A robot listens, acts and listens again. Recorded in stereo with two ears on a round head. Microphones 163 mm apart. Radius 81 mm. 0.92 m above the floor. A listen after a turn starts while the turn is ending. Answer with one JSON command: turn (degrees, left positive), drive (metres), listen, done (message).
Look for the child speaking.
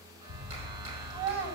{"turn": -90}
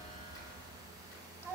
{"turn": 15}
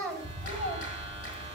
{"done": "Found it: a child speaking, straight ahead."}